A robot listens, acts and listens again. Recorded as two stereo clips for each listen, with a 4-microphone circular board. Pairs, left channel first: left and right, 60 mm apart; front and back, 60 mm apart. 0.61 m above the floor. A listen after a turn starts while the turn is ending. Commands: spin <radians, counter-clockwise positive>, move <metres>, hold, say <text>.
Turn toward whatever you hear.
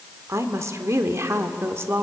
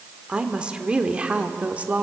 spin -2.09
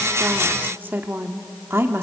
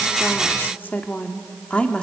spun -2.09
spin -1.13
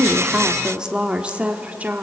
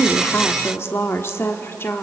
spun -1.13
spin -0.61
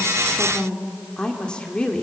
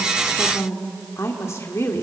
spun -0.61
spin 0.35
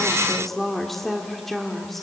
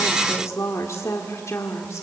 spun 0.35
say Found it: a woman speaking, straight ahead.